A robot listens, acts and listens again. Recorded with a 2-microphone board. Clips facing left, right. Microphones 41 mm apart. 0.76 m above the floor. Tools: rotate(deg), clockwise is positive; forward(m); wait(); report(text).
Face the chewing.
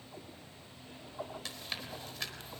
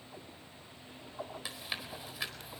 rotate(30)
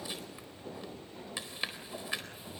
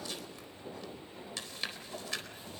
rotate(-20)
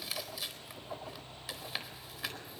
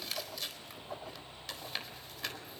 report("Found it: chewing, straight ahead.")